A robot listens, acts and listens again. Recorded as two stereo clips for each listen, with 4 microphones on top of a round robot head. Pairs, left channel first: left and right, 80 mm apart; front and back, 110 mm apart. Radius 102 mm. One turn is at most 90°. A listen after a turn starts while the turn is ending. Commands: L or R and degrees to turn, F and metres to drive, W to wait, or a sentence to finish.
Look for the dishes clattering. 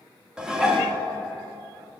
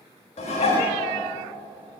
R10
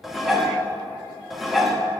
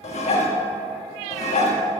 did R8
Found it: dishes clattering, straight ahead.